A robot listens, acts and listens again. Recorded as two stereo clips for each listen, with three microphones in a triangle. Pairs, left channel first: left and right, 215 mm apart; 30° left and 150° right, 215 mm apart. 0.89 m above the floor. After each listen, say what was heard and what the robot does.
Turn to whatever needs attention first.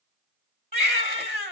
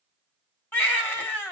The baby crying: 50° right. Turn 50° right.
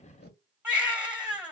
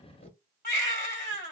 Found it: a baby crying, straight ahead, 1 to 2 m away.